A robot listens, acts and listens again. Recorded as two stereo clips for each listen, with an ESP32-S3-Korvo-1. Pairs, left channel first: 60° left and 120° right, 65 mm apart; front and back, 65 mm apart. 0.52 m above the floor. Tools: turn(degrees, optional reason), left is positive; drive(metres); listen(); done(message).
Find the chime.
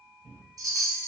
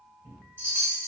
turn(degrees=-130, reason="The chime: 130° right.")
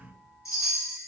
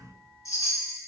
turn(degrees=25, reason="The chime is now 25° left.")
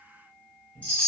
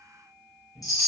turn(degrees=-10, reason="The chime is now 10° right.")
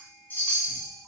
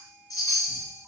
done("Found it: a chime, straight ahead.")